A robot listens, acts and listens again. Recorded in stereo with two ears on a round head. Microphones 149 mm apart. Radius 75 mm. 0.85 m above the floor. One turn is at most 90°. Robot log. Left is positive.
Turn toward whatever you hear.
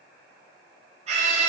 note: The scream: about 40° right or 140° right.
cmd yaw -40
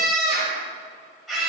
end: Found it: a scream, straight ahead, over 4 m away.